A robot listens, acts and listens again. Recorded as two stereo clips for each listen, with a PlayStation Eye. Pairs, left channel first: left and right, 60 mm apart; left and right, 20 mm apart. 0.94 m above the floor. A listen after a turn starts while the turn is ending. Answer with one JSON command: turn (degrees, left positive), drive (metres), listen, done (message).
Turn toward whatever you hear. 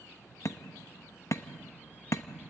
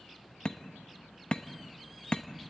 {"turn": 50}
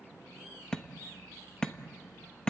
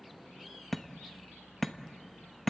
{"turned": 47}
{"turn": 10}
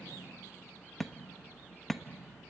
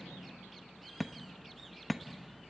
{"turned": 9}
{"done": "Facing the hammering."}